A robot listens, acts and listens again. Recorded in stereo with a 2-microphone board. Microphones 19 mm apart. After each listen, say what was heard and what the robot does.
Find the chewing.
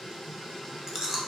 The chewing: about 25° right or 155° right. Turn 25° right.
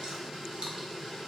Keep listening.
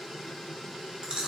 So it is at 125° right. Turn 125° right.
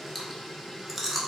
Found it: chewing, straight ahead, 1 to 2 m away.